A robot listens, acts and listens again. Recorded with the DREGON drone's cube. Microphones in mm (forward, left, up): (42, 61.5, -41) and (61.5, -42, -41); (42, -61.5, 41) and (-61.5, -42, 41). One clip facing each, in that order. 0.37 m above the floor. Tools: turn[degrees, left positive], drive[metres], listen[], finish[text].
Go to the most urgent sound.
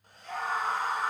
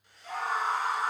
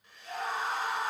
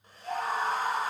Thought: The scream: 160° right.
Action: turn[-160]
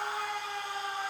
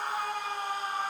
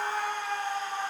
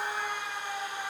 Thought: The scream is now 40° right.
Action: turn[-40]
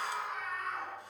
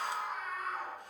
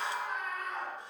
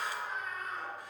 Action: drive[1.0]
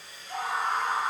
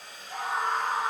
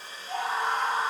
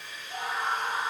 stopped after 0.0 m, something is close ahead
Thought: The scream is now 10° left.
Action: turn[10]
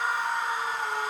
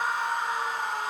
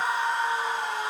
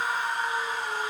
Action: finish[Something is in my way. I am facing the scream but have not reached it.]